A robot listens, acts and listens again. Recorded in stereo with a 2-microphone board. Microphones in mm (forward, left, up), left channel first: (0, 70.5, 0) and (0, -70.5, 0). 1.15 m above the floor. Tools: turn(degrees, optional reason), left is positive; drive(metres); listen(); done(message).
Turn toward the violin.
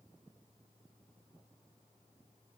listen()
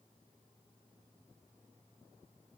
listen()
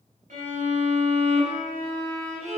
turn(degrees=-65, reason="The violin: about 65° right or 115° right.")
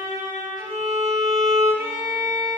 turn(degrees=-30, reason="So it is at 30° right.")
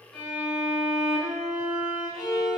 done("Facing the violin, 1 to 2 m away.")